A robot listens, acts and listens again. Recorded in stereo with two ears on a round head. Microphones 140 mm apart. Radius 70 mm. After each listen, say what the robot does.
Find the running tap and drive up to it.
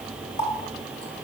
Turn 40° left.
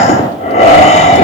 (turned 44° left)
Keep listening.
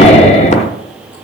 Keep listening.
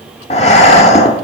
I heard a running tap, but can't make it out now. It was about straight ahead or 95° left. I did not reach it.